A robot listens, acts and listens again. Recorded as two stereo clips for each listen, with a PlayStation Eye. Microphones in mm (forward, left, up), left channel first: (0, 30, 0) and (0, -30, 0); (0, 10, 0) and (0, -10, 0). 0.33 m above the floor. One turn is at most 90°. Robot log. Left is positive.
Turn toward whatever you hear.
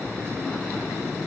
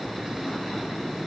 cmd idle
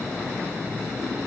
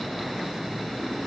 cmd idle
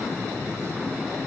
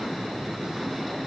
end: I can't make out anything.